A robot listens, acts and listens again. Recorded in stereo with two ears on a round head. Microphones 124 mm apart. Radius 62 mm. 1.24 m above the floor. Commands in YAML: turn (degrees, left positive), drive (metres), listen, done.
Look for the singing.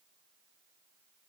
listen: true
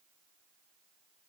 listen: true
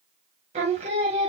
turn: -40
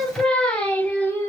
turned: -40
turn: 15
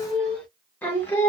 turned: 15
turn: 20
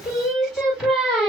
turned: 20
done: "Facing the singing."